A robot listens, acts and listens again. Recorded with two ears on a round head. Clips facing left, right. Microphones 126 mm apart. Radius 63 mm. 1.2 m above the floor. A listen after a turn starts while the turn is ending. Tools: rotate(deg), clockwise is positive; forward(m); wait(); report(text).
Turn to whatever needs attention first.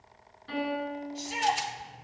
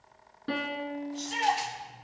rotate(-30)
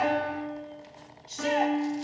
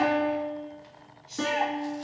rotate(-140)
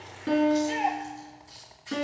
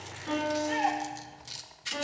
rotate(-25)
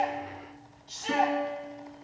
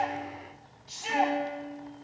rotate(10)
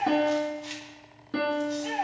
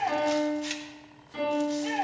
report("Facing the shout, 2 to 4 m away.")